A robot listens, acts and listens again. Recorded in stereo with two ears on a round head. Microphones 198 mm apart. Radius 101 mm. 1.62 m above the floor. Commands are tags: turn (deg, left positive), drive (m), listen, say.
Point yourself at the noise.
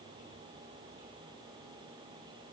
<listen/>
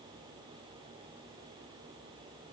<listen/>
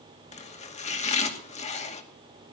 <turn deg="35"/>
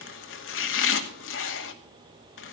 <turn deg="110"/>
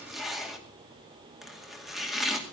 <say>Facing the chopping, 2 to 4 m away.</say>